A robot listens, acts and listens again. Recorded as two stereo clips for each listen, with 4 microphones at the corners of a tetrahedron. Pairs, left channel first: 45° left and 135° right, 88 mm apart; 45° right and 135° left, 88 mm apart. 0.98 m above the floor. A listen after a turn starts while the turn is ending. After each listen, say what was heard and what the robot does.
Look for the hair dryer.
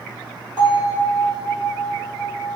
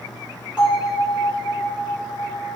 Keep listening.
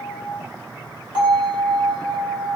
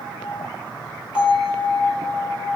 Keep listening.
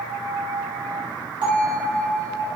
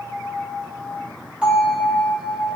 I can't make out a hair dryer, only a bell.